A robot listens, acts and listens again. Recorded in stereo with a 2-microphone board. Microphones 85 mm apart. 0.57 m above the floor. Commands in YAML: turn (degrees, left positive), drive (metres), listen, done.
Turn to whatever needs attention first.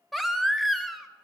turn: 30
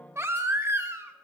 turn: -30
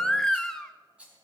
done: "Found it: a baby crying, straight ahead."